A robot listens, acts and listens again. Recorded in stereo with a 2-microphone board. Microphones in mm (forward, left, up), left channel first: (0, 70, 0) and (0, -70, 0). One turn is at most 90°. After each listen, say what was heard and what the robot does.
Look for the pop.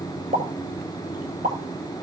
The pop: about 75° right or 105° right. Turn 75° right.
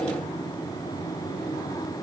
Keep listening.
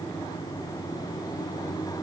I heard a pop, but can't make it out now. It was about straight ahead or 30° right.